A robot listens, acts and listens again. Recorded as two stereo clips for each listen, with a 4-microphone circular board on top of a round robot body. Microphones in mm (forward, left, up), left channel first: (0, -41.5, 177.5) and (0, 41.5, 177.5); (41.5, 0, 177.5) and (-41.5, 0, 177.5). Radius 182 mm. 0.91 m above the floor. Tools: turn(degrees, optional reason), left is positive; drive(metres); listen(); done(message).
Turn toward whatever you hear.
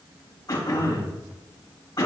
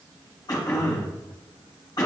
turn(degrees=-40, reason="The throat clearing: 40° right.")
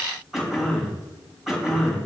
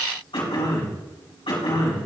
done("Found it: throat clearing, straight ahead, 2 to 4 m away.")